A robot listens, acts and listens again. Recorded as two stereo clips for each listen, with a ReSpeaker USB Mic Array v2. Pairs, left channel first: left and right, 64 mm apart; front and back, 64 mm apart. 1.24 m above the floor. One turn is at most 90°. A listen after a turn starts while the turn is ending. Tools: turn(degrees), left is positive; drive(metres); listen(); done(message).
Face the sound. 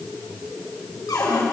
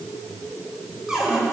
turn(degrees=90)
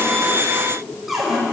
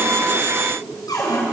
done("Found it: a cupboard door, straight ahead, over 4 m away.")